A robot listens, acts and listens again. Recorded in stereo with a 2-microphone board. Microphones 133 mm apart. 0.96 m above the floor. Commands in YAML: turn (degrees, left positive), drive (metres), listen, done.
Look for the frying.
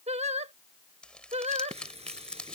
turn: -50
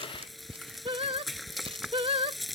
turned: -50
done: "Facing the frying."